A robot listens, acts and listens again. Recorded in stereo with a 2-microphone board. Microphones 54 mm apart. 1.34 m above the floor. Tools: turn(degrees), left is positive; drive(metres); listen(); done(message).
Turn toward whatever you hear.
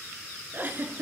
turn(degrees=-35)
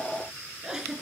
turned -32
turn(degrees=-10)
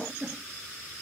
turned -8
done("Found it: a giggle, straight ahead, 2 to 4 m away.")